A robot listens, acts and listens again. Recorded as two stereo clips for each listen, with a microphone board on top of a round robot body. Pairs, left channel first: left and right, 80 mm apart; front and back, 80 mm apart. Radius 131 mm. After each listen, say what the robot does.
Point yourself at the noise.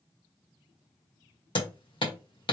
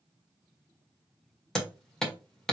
Turn 85° left.
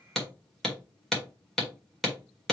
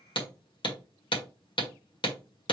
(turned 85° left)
Facing the hammering, 1 to 2 m away.